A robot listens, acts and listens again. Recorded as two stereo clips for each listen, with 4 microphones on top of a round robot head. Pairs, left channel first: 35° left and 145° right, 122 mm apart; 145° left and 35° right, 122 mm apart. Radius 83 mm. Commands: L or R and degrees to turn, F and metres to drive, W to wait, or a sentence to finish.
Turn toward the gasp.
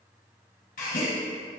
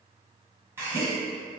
L35
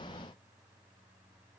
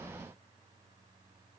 Facing where the gasp came from. I can't hear it now.